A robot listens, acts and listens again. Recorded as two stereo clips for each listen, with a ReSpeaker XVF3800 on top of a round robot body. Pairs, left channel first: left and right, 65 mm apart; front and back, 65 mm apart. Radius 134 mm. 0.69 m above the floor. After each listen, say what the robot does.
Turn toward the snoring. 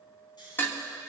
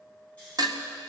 Turn 70° left.
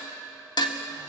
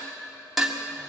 Keep listening.
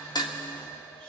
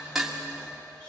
Keep listening.
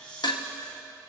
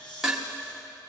Turn 15° left.
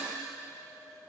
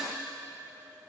Keep listening.
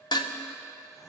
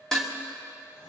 Keep listening.
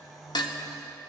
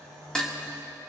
Found it: snoring, straight ahead, 2 to 4 m away.